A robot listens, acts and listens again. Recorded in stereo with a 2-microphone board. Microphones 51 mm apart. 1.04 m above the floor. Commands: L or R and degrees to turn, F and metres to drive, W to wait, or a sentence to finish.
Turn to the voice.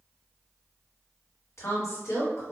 L90
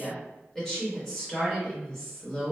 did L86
L10
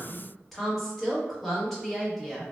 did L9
Facing the woman speaking.